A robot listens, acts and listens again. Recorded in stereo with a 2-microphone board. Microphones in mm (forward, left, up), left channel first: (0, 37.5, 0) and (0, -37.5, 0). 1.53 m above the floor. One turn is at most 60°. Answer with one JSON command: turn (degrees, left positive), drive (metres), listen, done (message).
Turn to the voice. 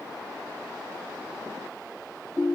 {"listen": true}
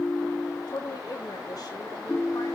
{"turn": 60}
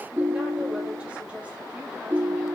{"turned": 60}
{"listen": true}
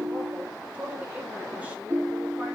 {"turn": -20}
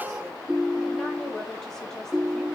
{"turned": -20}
{"listen": true}
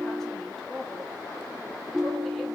{"done": "Found it: a woman speaking, straight ahead."}